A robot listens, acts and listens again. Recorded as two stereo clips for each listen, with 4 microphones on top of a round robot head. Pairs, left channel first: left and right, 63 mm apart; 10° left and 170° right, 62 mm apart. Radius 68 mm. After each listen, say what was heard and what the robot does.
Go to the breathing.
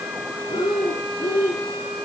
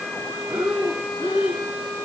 The breathing: 115° left. Turn 115° left.
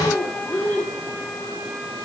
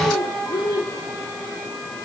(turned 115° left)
The breathing is now 25° left. Turn 25° left.
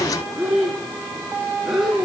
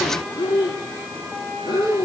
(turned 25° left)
Drive 1.0 m forward.
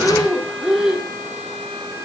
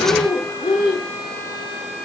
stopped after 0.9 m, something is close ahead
The breathing is now 10° right. Turn 10° right.
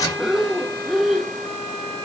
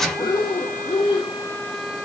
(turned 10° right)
Arrived at the breathing, straight ahead.